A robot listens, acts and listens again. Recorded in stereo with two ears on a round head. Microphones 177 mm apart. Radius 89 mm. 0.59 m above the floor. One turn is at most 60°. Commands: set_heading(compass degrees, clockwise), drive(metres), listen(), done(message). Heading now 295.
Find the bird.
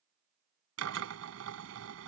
listen()
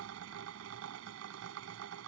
listen()
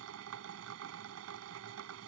done("I can't make out a bird, only a drill.")